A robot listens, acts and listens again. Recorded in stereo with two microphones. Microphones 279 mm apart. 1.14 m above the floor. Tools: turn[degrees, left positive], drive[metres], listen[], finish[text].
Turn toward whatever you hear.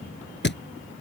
Thought: The thud: about 40° left or 140° left.
Action: turn[40]
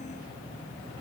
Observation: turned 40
Action: listen[]
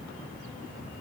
Action: finish[I heard a thud, but can't make it out now. It was about straight ahead or 100° left.]